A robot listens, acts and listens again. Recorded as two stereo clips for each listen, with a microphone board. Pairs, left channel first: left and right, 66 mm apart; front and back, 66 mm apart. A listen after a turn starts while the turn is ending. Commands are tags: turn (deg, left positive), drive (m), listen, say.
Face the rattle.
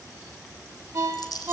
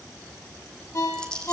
<turn deg="80"/>
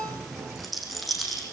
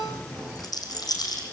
<say>Facing the rattle.</say>